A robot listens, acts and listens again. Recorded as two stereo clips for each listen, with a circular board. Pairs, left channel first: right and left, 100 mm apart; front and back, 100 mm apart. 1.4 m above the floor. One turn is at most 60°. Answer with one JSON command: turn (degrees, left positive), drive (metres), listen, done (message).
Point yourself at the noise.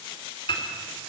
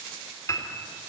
{"turn": -60}
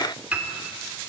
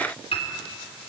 {"turn": 15}
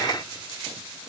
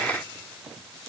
{"listen": true}
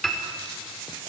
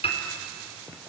{"done": "Found it: a piano, straight ahead, 2 to 4 m away."}